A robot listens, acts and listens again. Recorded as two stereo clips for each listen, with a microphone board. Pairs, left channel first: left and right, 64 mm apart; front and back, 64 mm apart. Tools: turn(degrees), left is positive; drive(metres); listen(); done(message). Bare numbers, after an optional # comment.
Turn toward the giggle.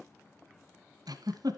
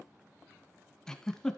# The giggle: 80° right.
turn(-80)
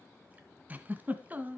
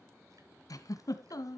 # The giggle is now 25° right.
turn(-25)
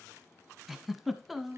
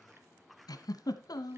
done("Found it: a giggle, straight ahead, 1 to 2 m away.")